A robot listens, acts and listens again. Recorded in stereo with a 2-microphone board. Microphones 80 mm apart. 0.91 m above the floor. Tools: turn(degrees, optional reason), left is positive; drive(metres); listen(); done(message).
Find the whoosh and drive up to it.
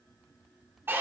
listen()
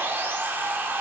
listen()
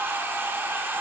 done("I can't make out a whoosh to turn to.")